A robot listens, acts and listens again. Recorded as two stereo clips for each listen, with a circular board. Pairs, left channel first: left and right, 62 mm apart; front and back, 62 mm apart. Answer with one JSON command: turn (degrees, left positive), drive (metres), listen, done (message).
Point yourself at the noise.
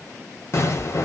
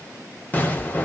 {"turn": 60}
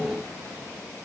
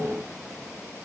{"done": "Facing where the explosion came from. I can't hear it now."}